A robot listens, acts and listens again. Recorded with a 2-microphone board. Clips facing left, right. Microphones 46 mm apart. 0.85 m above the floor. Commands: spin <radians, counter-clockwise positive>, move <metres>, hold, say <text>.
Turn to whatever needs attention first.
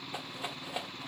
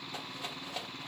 hold
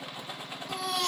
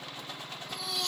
spin 1.57
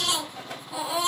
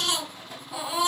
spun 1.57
say Facing the baby crying.